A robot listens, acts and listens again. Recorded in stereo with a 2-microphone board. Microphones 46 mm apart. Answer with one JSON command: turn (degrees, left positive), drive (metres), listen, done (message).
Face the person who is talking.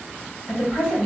{"turn": 55}
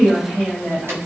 {"turn": 20}
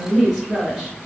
{"done": "Found it: a woman speaking, straight ahead, 1 to 2 m away."}